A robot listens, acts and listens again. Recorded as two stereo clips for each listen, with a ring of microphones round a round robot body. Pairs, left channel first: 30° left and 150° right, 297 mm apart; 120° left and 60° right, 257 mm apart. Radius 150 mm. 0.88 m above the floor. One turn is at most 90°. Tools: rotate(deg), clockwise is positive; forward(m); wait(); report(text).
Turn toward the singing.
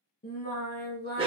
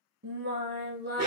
rotate(20)
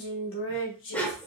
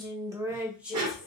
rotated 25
rotate(-25)
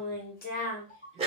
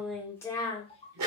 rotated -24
rotate(-75)
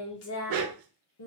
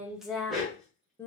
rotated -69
rotate(-40)
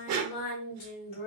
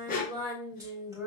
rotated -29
rotate(-15)
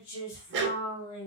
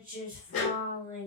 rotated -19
report("Facing the singing, 2 to 4 m away.")